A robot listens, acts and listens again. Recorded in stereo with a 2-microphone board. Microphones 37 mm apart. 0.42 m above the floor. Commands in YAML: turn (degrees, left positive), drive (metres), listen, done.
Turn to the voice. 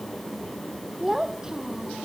turn: -15
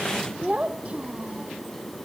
turn: -35
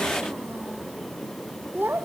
turn: -100
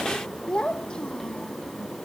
turn: 20
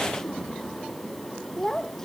turn: 10
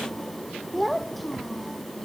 done: "Facing the child speaking."